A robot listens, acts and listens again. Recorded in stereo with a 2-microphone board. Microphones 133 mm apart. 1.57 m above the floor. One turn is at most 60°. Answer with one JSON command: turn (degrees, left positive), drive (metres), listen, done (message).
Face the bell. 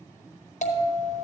{"turn": 60}
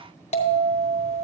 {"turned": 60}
{"turn": 55}
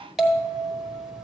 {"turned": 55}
{"done": "Facing the bell, 1 to 2 m away."}